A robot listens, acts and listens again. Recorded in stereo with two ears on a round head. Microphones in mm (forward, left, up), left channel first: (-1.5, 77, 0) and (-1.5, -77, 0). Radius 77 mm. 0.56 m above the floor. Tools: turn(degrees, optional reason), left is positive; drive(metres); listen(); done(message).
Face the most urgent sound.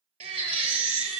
turn(degrees=-35, reason="The baby crying: about 35° right or 145° right.")
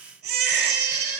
turn(degrees=-110, reason="So it is at 110° right.")
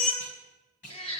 turn(degrees=35, reason="The baby crying is now 35° left.")
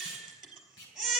done("Facing the baby crying.")